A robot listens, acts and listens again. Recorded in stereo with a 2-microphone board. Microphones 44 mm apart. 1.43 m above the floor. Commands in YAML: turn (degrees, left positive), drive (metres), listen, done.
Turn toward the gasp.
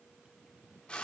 listen: true
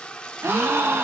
turn: -75
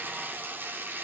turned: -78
listen: true
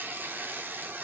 done: "I heard a gasp, but can't make it out now. It was about 5° left or 30° right."